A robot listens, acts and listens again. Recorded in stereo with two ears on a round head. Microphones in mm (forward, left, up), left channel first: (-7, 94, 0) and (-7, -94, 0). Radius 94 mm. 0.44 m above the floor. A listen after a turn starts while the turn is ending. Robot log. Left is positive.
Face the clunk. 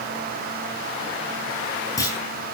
note: The clunk: about 15° left or 165° left.
cmd yaw +15
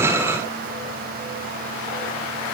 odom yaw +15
cmd idle
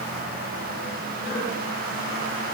end: I heard a clunk, but can't make it out now. It was about straight ahead or 150° left.